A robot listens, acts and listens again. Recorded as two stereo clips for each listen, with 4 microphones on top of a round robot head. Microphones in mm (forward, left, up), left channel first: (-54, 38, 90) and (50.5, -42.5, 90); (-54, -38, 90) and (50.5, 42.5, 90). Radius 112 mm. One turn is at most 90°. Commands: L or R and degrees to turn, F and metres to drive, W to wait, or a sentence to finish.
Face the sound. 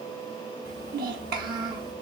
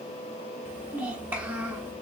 R40
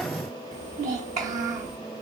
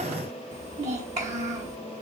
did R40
Facing the child speaking.